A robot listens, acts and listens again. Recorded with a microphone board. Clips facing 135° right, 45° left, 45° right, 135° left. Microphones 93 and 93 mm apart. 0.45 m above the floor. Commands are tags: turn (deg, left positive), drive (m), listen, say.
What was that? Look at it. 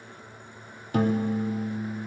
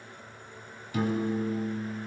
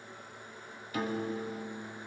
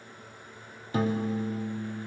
<turn deg="-170"/>
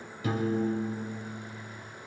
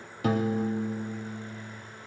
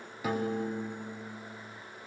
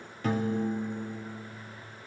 <turn deg="35"/>
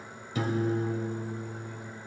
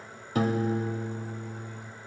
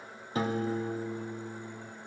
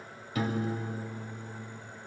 <turn deg="10"/>
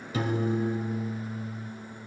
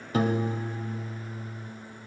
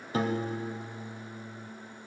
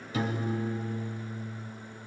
<say>Facing the piano, under 1 m away.</say>